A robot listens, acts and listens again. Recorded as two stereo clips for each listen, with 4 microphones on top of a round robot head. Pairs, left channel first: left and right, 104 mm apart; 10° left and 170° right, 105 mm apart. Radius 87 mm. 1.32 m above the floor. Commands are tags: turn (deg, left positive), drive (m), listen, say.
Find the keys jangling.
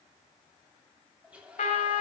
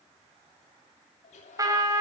<listen/>
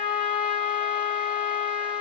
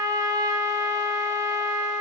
<listen/>
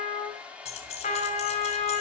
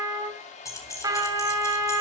<turn deg="70"/>
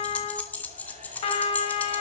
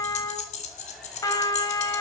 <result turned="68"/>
<turn deg="15"/>
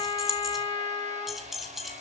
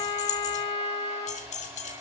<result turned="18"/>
<say>Found it: keys jangling, straight ahead, 2 to 4 m away.</say>